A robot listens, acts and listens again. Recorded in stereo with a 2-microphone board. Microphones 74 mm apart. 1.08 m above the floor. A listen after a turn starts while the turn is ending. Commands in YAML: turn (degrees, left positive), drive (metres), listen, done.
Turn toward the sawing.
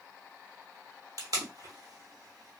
listen: true
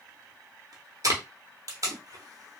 listen: true
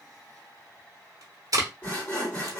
turn: 25
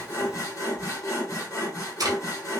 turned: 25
turn: 130
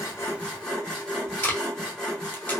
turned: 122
turn: 10
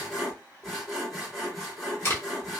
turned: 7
done: "Found it: sawing, straight ahead."